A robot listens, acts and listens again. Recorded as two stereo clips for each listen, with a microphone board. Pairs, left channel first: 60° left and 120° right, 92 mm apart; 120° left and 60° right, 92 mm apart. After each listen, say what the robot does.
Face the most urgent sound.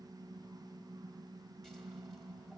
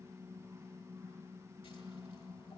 Keep listening.
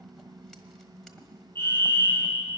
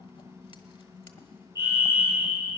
Facing the fire alarm.